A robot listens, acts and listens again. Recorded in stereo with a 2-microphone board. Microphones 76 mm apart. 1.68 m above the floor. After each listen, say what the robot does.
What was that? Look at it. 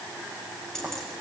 Turn 30° left.
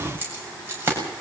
Turn 30° right.
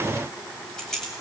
Facing the keys jangling, over 4 m away.